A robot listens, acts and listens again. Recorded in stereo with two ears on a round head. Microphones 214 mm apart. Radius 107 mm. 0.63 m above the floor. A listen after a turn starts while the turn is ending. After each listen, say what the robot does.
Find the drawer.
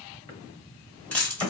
Turn 20° left.
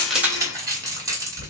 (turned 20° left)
Keep listening.
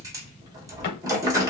Keep listening.
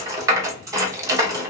I heard a drawer, but can't make it out now. It was about straight ahead or 140° left.